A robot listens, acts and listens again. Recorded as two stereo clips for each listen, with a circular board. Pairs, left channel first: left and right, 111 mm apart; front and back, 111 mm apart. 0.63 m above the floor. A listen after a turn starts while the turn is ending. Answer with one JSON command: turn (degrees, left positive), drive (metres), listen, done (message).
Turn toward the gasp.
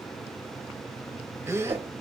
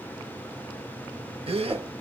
{"turn": -155}
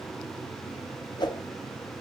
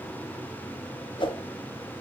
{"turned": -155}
{"done": "Facing where the gasp came from. I can't hear it now."}